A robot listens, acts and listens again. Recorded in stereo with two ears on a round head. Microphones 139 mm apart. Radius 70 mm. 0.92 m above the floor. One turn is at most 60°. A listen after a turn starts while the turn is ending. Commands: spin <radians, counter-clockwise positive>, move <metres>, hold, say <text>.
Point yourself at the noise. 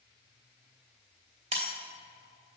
spin -0.70
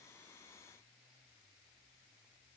hold
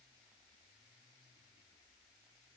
say I heard breaking glass, but can't make it out now. It was about straight ahead or 100° right.